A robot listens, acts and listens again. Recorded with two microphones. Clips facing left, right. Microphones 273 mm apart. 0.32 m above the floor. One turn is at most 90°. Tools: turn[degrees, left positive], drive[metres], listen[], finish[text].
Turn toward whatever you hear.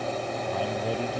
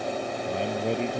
Thought: The man speaking: about 25° right or 155° right.
Action: turn[-25]
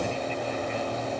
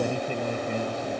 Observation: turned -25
Thought: So it is at 130° right.
Action: turn[-90]
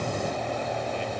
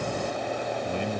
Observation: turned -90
Thought: Nothing new. It was at 40° right.
Action: turn[-40]
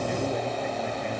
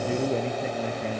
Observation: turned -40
Thought: The man speaking is now 35° right.
Action: turn[-35]
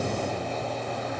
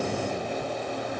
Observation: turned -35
Action: listen[]
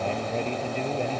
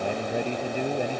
Thought: The man speaking is now 15° right.
Action: turn[-15]
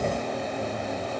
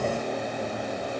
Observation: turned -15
Action: listen[]
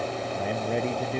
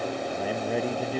Action: finish[Found it: a man speaking, straight ahead.]